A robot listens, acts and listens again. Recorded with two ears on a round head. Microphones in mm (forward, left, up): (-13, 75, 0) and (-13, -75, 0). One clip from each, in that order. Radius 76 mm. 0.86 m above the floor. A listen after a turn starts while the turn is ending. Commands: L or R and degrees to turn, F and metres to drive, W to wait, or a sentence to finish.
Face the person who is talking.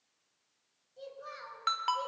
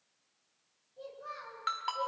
L40
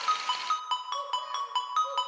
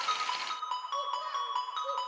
W
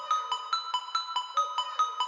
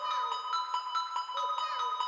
W
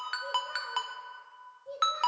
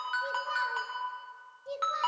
R85
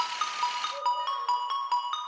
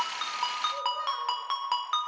W
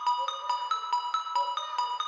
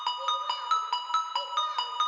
W
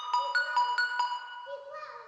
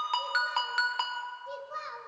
R20
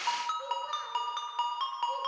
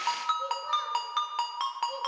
W
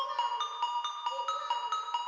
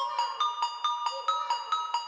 W
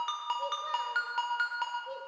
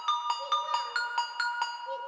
Facing where the child speaking came from. I can't hear it now.